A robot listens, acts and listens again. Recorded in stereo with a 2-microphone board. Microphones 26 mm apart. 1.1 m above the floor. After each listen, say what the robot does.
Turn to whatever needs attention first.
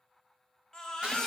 Turn 30° left.
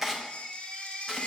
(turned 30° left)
Turn 135° left.
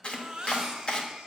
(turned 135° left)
Turn 20° right.
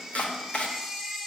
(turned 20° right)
Found it: a baby crying, straight ahead, 1 to 2 m away.